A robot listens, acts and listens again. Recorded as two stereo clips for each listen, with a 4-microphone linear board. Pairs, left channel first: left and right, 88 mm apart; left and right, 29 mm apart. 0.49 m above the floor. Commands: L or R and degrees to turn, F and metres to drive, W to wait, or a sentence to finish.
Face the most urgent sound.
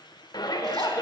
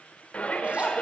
L50
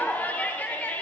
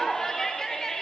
L20
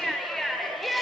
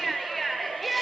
Found it: a shout, straight ahead, 1 to 2 m away.